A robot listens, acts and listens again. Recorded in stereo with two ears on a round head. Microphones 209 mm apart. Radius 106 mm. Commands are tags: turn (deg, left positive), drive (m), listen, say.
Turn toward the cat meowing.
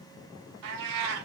<turn deg="-90"/>
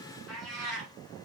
<say>Facing the cat meowing, 2 to 4 m away.</say>